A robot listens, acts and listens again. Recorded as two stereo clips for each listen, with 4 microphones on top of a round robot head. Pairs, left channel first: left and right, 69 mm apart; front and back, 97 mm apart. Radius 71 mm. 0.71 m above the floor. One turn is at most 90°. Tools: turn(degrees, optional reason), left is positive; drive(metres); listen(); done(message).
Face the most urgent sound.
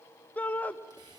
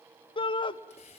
turn(degrees=25, reason="The shout: 25° left.")
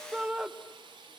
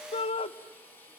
turn(degrees=-10, reason="The shout is now 10° right.")
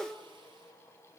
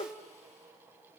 done("Found it: a shout, straight ahead, under 1 m away.")